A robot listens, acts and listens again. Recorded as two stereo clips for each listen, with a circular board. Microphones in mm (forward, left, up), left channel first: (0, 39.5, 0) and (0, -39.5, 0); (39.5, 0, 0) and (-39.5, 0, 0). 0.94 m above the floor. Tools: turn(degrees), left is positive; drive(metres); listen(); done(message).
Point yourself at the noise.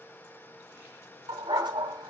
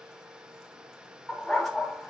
turn(degrees=-90)
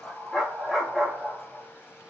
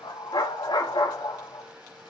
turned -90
turn(degrees=-10)
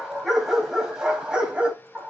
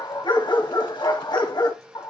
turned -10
turn(degrees=-15)
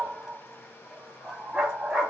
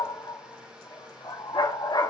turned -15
done("Facing the dog barking, 2 to 4 m away.")